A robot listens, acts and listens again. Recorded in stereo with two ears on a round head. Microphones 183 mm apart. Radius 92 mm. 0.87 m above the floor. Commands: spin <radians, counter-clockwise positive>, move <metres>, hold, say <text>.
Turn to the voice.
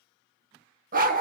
hold
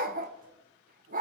hold
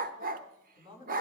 spin -0.44
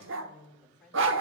say Facing the woman speaking.